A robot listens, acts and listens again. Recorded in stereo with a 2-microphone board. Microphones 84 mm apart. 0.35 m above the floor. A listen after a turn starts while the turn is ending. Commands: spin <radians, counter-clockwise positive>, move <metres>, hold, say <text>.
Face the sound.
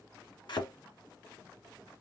spin 1.13
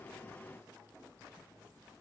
hold
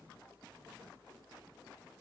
say I heard a thud, but can't make it out now. It was about straight ahead or 50° left.